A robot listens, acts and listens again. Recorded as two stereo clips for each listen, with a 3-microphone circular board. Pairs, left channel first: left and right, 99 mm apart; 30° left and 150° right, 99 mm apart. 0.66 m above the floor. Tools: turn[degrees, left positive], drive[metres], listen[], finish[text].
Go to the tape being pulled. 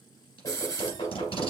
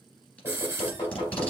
Thought: The tape being pulled: 105° left.
Action: turn[105]
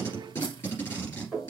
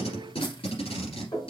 Thought: The tape being pulled is now 25° left.
Action: turn[25]
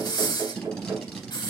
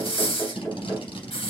Action: drive[1.0]
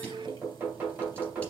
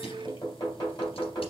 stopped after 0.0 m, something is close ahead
Action: listen[]
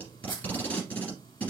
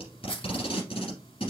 Thought: The tape being pulled is now 15° left.
Action: turn[15]
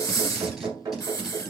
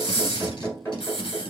Action: listen[]
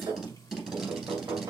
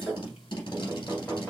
Action: finish[Something is in my way. I am facing the tape being pulled but have not reached it.]